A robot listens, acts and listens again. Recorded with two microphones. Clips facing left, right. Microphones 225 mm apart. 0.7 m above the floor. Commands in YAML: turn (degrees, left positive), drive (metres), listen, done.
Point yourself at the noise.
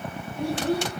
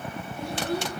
turn: 90
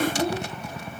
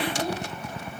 turn: -15
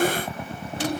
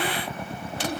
done: "Facing the child speaking, 2 to 4 m away."